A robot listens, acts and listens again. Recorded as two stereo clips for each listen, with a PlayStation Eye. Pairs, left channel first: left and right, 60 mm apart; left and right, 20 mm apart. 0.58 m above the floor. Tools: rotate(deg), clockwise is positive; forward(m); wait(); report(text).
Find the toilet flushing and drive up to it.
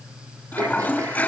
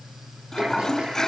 rotate(-35)
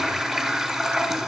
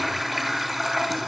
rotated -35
forward(1.0)
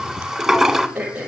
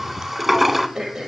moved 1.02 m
forward(1.0)
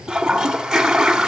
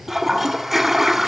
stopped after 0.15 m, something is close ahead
report("Arrived at the toilet flushing, straight ahead.")